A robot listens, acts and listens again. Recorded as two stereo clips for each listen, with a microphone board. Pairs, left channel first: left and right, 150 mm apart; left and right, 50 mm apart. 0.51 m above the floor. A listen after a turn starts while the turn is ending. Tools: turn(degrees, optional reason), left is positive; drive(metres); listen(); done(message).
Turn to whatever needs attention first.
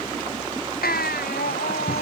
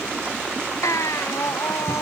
turn(degrees=90)
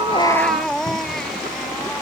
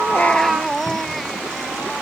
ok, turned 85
done("Facing the baby crying.")